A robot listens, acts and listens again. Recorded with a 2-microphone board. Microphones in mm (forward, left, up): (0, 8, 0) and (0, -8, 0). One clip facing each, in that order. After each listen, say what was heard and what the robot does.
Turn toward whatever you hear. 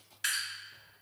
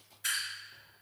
The dripping: about 60° left or 120° left. Turn 60° left.
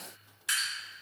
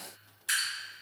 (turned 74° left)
So it is at 20° left. Turn 20° left.
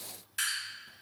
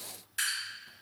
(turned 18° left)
Found it: dripping, straight ahead.